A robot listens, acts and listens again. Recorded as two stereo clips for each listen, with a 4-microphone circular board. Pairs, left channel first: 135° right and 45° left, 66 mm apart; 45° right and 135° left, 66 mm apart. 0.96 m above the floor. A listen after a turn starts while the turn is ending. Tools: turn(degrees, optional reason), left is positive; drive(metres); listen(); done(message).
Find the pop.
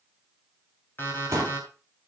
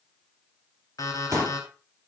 turn(degrees=90, reason="The pop: 90° left.")
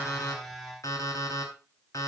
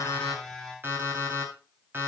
done("Facing where the pop came from. I can't hear it now.")